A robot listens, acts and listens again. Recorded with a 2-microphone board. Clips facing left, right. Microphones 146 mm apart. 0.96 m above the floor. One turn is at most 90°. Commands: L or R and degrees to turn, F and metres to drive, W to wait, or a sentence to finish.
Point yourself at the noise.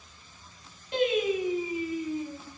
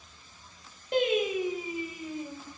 R50
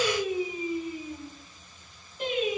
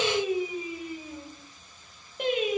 R70
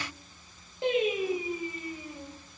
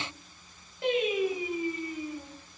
L25
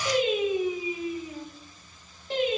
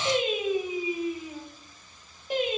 R15
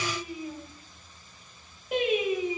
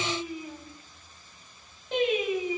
L10
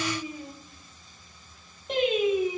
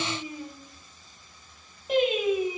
Found it: singing, straight ahead.